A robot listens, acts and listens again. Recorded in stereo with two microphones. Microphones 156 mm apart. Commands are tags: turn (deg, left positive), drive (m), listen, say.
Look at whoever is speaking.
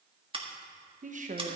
<turn deg="-55"/>
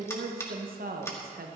<turn deg="-70"/>
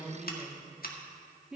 <say>Found it: a woman speaking, straight ahead, 1 to 2 m away.</say>